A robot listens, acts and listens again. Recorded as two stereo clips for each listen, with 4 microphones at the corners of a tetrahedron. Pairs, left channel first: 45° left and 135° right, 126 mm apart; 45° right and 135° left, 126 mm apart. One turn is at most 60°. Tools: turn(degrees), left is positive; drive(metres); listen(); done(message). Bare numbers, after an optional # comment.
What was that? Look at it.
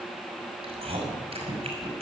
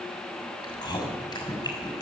# The chewing: 100° right.
turn(-60)
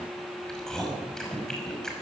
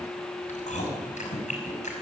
# The chewing is now 40° right.
turn(-40)
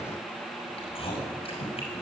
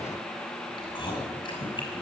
done("Found it: chewing, straight ahead.")